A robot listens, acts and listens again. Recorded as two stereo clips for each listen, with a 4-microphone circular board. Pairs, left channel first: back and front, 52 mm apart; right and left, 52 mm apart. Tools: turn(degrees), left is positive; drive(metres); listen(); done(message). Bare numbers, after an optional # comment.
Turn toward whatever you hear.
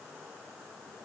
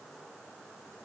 listen()
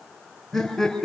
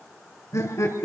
# The laughter: 95° right.
turn(-95)
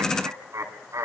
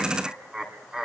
# The laughter is now 10° left.
turn(10)
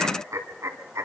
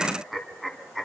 done("Facing the laughter.")